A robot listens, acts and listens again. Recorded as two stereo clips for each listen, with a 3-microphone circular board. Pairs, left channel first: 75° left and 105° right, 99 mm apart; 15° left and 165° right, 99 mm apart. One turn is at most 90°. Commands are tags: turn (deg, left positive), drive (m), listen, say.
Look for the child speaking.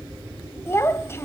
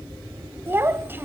<turn deg="90"/>
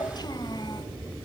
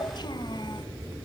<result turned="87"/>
<turn deg="45"/>
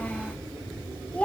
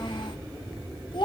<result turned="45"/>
<say>Facing the child speaking, 1 to 2 m away.</say>